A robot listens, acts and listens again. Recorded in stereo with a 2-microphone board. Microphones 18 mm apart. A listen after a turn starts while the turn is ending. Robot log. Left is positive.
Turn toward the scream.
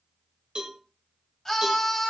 note: The scream: about 20° left or 160° left.
cmd yaw +20
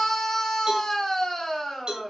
note: So it is at 135° left.
cmd yaw +135
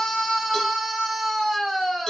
note: The scream is now 20° left.
cmd yaw +20
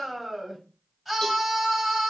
end: Facing the scream.